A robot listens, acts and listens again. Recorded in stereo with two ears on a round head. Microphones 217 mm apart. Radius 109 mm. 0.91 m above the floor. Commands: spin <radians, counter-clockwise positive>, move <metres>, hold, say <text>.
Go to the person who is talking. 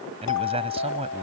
spin -0.44
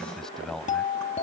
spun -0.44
move 1.0
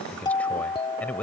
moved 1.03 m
move 1.0
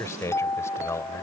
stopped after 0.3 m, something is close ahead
spin 0.17
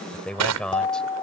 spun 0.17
say Something is in my way. I am facing the man speaking but have not reached it.